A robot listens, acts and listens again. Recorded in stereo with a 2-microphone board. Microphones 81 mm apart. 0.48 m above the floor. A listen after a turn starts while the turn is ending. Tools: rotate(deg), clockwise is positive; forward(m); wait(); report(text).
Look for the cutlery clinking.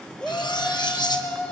rotate(-65)
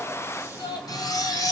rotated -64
rotate(-50)
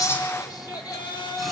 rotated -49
wait()
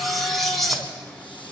report("Found it: cutlery clinking, straight ahead, 2 to 4 m away.")